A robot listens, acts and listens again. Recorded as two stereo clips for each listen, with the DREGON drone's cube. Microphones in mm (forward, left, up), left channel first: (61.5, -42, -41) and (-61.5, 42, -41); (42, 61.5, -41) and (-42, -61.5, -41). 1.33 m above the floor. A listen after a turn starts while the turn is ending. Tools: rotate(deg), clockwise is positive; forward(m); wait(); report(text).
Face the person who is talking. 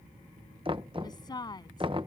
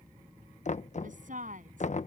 rotate(95)
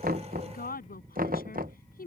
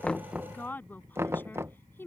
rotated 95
rotate(20)
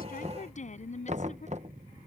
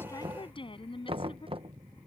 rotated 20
report("Found it: a woman speaking, straight ahead.")